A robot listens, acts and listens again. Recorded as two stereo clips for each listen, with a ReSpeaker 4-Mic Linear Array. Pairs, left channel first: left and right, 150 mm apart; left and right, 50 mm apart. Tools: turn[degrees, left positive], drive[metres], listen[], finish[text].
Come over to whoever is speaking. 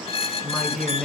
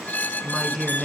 Action: turn[30]
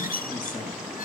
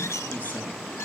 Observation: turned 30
Action: listen[]
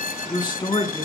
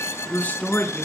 Thought: So it is at 150° left.
Action: turn[150]
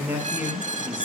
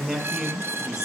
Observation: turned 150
Thought: The man speaking is now 10° right.
Action: turn[-10]
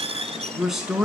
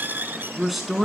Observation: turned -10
Action: drive[1.0]
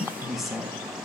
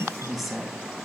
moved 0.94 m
Action: drive[1.0]
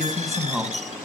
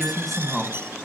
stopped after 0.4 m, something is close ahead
Action: finish[Blocked. The man speaking is further on, straight ahead.]